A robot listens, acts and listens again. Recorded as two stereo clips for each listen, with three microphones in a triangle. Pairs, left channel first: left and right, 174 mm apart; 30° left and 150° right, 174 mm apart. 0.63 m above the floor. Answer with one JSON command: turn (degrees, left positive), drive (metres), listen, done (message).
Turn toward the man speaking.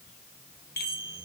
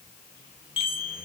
{"listen": true}
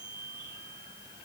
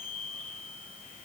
{"listen": true}
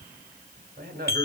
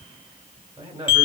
{"turn": -90}
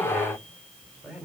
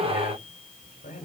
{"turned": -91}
{"done": "Facing the man speaking, 2 to 4 m away."}